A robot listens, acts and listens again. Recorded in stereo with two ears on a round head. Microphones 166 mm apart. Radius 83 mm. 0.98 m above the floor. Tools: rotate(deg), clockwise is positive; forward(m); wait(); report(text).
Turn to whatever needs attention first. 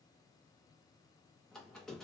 wait()
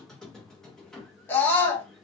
rotate(-30)
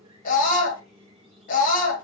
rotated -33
rotate(-135)
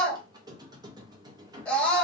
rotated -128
report("Found it: a scream, straight ahead, 1 to 2 m away.")